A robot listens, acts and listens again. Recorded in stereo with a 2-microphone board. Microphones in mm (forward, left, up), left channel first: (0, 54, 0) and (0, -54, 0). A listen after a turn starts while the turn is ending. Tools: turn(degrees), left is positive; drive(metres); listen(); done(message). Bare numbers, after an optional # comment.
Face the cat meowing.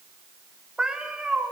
turn(-30)
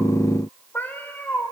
# So it is at 20° left.
turn(20)
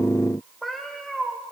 done("Facing the cat meowing, 2 to 4 m away.")